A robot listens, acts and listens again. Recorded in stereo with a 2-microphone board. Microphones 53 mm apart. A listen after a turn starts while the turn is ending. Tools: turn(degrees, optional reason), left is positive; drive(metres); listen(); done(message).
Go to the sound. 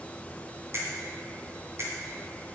turn(degrees=-55, reason="The finger snap: about 55° right or 125° right.")
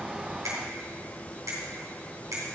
turn(degrees=-65, reason="So it is at 65° right.")
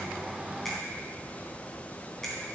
listen()
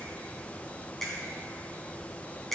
turn(degrees=10, reason="The finger snap is now 10° left.")
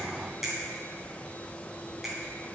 drive(metres=1.0)
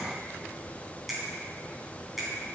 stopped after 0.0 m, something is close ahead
done("Blocked. The finger snap is further on, straight ahead.")